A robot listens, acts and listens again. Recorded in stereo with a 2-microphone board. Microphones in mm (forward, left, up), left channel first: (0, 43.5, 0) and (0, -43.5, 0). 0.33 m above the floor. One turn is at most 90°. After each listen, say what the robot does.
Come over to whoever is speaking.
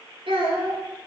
Turn 90° right.
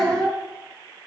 Drive 1.0 m forward.
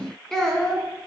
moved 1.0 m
Turn 10° left.
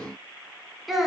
Drive 1.0 m forward.
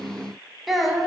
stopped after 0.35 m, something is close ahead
Arrived at the child speaking, straight ahead.